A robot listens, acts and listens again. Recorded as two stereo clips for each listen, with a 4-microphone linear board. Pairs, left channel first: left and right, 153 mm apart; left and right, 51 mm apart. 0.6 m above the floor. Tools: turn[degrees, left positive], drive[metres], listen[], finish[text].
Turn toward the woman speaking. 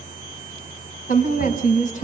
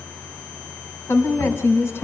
Thought: The woman speaking: about 55° left or 125° left.
Action: turn[55]
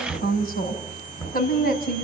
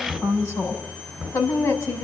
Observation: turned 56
Thought: So it is at 80° left.
Action: turn[80]
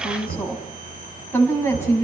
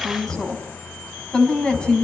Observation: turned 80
Thought: The woman speaking is now 15° left.
Action: turn[15]
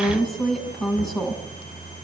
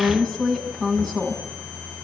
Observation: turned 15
Action: finish[Found it: a woman speaking, straight ahead.]